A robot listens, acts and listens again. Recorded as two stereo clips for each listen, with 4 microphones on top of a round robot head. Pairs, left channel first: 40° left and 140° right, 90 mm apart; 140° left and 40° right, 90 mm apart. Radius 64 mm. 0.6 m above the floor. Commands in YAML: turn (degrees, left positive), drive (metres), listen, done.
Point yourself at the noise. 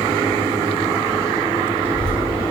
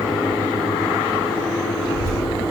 turn: 150
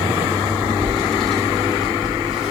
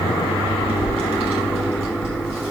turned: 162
turn: -55
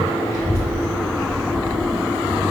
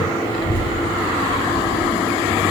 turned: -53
turn: -10
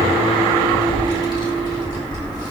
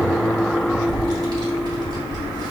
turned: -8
done: "Facing the child speaking, 2 to 4 m away."